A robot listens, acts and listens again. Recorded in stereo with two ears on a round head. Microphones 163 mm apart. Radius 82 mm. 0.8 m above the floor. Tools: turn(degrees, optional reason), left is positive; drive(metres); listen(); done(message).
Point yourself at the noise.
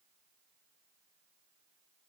listen()
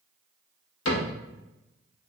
turn(degrees=90)
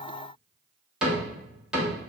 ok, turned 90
done("Found it: a cupboard door, straight ahead, under 1 m away.")